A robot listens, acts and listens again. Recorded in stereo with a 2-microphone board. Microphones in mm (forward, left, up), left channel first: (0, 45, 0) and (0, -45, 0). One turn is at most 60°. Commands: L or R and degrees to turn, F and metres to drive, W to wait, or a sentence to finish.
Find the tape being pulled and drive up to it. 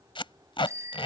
L60
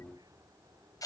L45
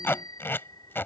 L25
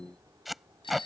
F1.0
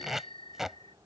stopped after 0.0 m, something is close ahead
Something is in my way. I am facing the tape being pulled but have not reached it.